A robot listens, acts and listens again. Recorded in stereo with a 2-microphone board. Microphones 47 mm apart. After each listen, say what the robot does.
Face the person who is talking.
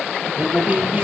Turn 35° right.
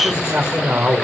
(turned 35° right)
Turn 105° right.
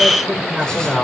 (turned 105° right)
Turn 10° right.
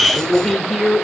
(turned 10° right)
Found it: a man speaking, straight ahead.